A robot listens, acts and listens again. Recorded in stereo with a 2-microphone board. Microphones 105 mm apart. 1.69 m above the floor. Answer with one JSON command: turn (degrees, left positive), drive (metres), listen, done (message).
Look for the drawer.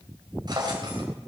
{"turn": -40}
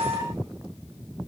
{"listen": true}
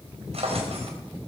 {"turn": -95}
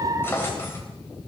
{"turn": 20}
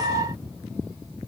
{"listen": true}
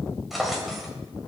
{"done": "Found it: a drawer, straight ahead."}